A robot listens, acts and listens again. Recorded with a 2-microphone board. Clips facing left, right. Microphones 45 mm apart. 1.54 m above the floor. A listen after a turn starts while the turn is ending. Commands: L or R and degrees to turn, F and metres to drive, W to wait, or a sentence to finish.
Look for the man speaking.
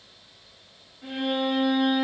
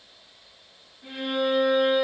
W
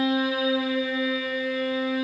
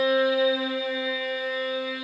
W
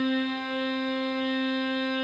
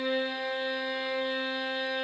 I can't make out a man speaking, only a violin.